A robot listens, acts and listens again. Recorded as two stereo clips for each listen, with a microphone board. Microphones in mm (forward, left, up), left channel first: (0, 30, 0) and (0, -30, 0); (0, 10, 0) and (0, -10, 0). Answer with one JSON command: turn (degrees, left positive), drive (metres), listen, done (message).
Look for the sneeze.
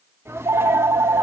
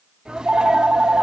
{"turn": -45}
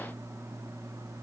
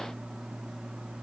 {"listen": true}
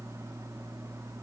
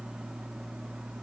{"done": "I heard a sneeze, but can't make it out now. It was about straight ahead or 90° right."}